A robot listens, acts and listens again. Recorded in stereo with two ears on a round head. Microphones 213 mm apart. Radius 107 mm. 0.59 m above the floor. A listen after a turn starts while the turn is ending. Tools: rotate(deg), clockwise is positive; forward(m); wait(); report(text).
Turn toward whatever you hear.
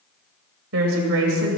rotate(60)
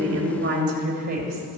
rotate(40)
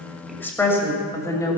rotate(-15)
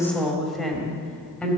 report("Facing the woman speaking, 2 to 4 m away.")